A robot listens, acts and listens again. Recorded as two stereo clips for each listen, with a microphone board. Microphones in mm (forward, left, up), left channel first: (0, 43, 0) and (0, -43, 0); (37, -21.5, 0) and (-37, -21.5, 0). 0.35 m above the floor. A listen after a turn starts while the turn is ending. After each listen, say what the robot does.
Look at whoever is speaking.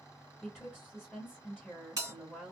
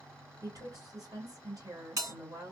Turn 175° right.
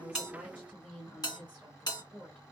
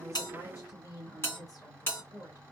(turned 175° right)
Turn 20° left.
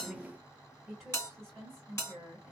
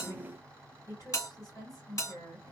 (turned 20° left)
Found it: a woman speaking, straight ahead, 2 to 4 m away.